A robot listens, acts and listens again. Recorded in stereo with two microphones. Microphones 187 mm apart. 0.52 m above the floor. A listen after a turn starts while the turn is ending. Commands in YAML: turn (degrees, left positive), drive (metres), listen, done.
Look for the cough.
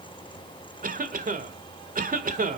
turn: -50
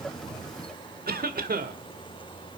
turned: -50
turn: -70
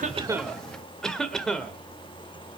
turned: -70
done: "Facing the cough."